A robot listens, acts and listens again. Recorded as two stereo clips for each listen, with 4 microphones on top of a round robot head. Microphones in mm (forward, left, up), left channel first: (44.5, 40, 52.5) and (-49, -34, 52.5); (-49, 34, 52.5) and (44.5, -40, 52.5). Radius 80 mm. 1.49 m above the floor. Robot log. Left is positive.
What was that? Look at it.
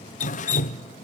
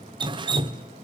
note: The dripping: 15° left.
cmd yaw +15
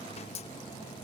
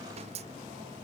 end: Facing the dripping.